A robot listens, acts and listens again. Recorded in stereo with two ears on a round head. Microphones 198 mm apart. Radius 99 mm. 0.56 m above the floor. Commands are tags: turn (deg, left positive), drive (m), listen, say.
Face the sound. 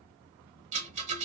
<turn deg="-35"/>
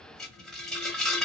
<say>Found it: a rattle, straight ahead, 1 to 2 m away.</say>